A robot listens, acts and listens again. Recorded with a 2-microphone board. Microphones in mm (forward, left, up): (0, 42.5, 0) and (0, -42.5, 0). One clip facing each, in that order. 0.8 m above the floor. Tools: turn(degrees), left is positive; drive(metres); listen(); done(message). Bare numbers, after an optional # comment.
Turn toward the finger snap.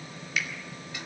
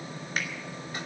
# The finger snap: about 45° right or 135° right.
turn(-45)
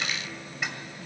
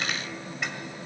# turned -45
listen()
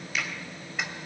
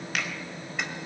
listen()
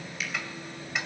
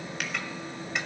done("I heard a finger snap, but can't make it out now. It was about straight ahead or 90° right.")